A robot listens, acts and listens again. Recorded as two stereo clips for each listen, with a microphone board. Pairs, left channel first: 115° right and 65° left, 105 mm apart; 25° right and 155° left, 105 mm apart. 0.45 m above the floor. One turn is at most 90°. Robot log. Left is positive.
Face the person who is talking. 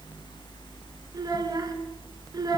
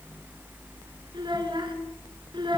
note: The child speaking: 115° left.
cmd yaw +90
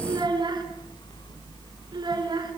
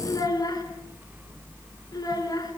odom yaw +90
note: The child speaking is now 25° left.
cmd yaw +25
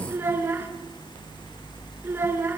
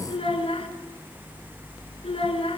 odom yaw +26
end: Found it: a child speaking, straight ahead, over 4 m away.